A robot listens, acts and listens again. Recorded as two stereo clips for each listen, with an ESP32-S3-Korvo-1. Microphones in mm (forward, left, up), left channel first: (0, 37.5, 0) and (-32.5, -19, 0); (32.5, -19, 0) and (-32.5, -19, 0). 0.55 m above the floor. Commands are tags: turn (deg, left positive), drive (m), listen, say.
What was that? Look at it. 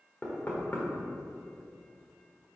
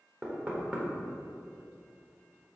<turn deg="115"/>
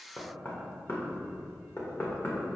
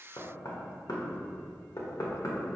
<turn deg="10"/>
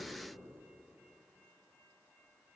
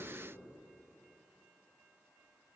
<listen/>
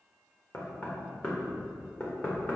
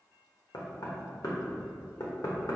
<say>Found it: knocking, straight ahead.</say>